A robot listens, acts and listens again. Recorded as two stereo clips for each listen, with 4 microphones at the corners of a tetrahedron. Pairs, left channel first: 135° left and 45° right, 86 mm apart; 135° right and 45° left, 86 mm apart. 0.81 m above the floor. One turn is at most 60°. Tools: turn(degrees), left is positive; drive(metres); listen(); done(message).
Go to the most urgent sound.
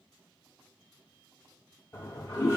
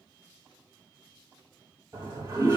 listen()
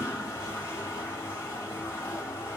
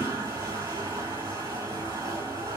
listen()
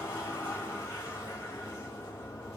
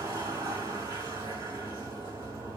done("I can't make out anything urgent, only a toilet flushing.")